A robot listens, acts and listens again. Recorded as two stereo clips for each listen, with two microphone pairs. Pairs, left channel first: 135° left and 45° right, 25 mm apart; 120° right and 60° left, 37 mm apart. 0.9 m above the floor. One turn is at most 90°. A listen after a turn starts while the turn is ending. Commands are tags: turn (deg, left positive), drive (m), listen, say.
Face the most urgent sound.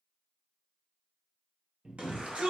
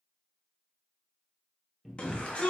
<turn deg="-65"/>
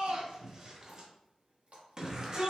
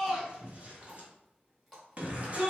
<turn deg="15"/>
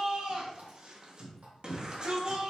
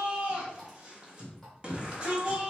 <say>Found it: a shout, straight ahead.</say>